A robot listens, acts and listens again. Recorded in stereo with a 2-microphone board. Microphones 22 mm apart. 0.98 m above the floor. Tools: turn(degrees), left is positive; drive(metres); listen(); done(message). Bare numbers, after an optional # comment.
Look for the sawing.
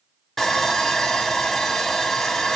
turn(30)
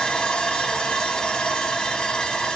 # So it is at 130° left.
turn(130)
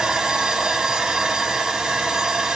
# The sawing is now 40° right.
turn(-40)
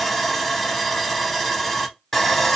# The sawing is now 15° left.
turn(15)
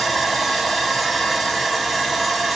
done("Found it: sawing, straight ahead.")